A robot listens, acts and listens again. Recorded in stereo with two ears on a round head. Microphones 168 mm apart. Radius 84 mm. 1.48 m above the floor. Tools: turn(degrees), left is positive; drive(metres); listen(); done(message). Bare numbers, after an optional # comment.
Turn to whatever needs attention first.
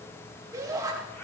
# The shout: about 20° right or 160° right.
turn(-20)
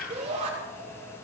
# So it is at 140° right.
turn(-140)
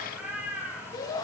# The shout is now 25° left.
turn(25)
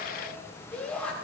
done("Facing the shout, over 4 m away.")